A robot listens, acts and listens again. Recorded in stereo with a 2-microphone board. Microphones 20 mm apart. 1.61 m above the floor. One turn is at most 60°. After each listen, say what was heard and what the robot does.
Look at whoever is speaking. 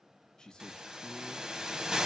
The man speaking: about 35° left or 145° left. Turn 35° left.
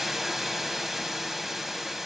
Keep listening.
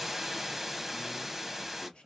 So it is at 110° left. Turn 60° left.
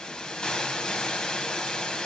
Nothing new. It was at 50° left. Turn 50° left.
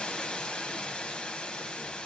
Keep listening.
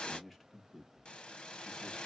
The man speaking is now 15° left. Turn 15° left.
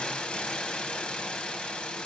Keep listening.
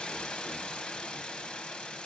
Keep listening.
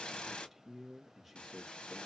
Facing the man speaking, 1 to 2 m away.